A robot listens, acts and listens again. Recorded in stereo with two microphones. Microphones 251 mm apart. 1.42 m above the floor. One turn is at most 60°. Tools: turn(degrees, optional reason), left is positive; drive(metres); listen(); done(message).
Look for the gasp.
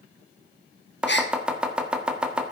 turn(degrees=45, reason="The gasp: about 45° left or 135° left.")
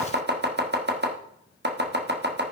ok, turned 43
listen()
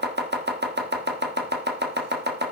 done("I heard a gasp, but can't make it out now. It was about straight ahead or 95° left.")